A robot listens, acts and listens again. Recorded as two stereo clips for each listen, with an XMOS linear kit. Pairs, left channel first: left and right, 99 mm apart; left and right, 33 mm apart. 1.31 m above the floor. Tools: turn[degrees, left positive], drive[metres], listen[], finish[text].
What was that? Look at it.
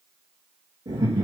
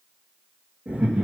Thought: The laughter: about 60° right or 120° right.
Action: turn[-60]
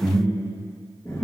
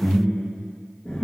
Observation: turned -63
Thought: So it is at 30° left.
Action: turn[30]
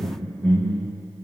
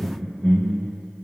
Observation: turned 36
Thought: The laughter is now 20° left.
Action: turn[20]
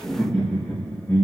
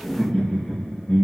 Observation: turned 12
Thought: The laughter is now 35° left.
Action: turn[35]
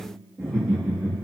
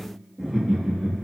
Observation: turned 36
Thought: The laughter is now 10° left.
Action: turn[10]
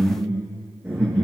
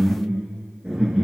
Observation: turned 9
Action: finish[Facing the laughter, 2 to 4 m away.]